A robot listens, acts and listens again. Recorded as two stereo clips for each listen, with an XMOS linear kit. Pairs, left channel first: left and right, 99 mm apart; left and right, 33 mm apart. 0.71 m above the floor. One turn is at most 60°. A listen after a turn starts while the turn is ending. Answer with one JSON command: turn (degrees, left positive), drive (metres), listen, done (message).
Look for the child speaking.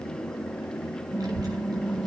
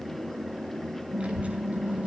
{"turn": -40}
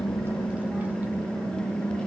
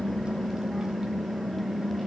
{"listen": true}
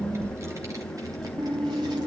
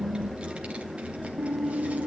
{"turn": -40}
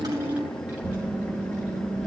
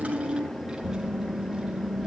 {"turn": -15}
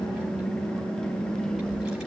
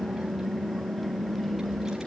{"done": "Found it: a child speaking, straight ahead, 2 to 4 m away."}